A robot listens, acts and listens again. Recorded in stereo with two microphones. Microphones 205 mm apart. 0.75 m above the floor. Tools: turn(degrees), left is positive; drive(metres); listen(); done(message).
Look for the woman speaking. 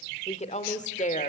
turn(degrees=40)
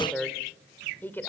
turn(degrees=10)
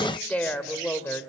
turn(degrees=10)
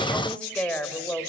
turn(degrees=10)
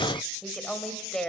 done("Found it: a woman speaking, straight ahead, 2 to 4 m away.")